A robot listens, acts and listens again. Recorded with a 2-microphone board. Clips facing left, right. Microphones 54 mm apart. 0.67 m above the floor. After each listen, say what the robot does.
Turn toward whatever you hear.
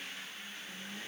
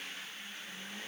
Keep listening.
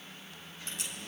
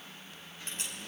Turn 40° right.
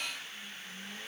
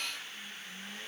Keep listening.
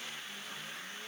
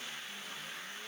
I heard a crack, but can't make it out now. It was about straight ahead or 100° right.